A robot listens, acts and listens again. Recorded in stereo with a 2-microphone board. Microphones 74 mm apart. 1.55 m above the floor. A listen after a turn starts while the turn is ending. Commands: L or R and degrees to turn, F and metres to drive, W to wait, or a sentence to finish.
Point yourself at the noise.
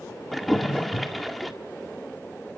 L30
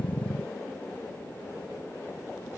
W
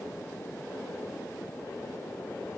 I heard a splash, but can't make it out now. It was about 30° right or 150° left.